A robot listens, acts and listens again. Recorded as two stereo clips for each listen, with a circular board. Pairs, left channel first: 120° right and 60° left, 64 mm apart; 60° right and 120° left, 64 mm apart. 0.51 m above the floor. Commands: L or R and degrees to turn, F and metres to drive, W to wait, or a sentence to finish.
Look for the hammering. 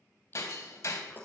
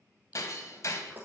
R95
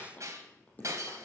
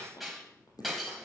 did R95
L30
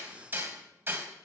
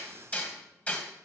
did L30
Facing the hammering.